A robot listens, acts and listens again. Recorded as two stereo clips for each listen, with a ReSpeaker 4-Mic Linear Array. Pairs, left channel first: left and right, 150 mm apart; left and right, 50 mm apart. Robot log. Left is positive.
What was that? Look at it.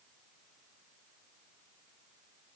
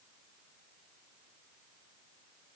cmd idle
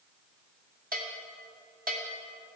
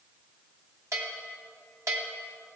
note: The bell: about 70° right or 110° right.
cmd yaw -70
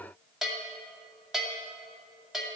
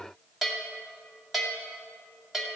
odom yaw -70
end: Facing the bell, 2 to 4 m away.